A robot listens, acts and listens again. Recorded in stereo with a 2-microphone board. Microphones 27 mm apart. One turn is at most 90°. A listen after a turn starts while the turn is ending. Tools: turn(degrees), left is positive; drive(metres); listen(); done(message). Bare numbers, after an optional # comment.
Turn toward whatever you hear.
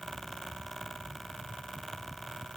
listen()
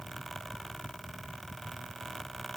listen()
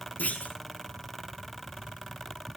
turn(90)
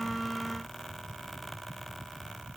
done("Facing where the clunk came from. I can't hear it now.")